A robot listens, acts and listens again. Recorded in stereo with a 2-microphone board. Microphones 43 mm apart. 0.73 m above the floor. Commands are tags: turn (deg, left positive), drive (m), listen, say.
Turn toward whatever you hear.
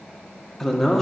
<turn deg="30"/>
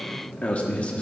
<turn deg="145"/>
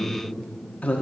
<turn deg="40"/>
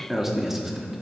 <turn deg="-10"/>
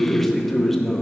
<say>Facing the man speaking, 1 to 2 m away.</say>